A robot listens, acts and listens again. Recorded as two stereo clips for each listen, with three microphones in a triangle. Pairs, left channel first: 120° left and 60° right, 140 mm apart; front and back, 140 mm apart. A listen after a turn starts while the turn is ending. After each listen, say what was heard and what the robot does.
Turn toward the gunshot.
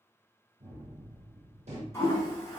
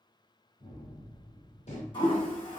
The gunshot: 30° right. Turn 30° right.
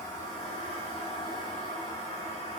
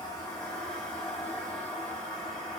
I heard a gunshot from this way, but can't make it out now.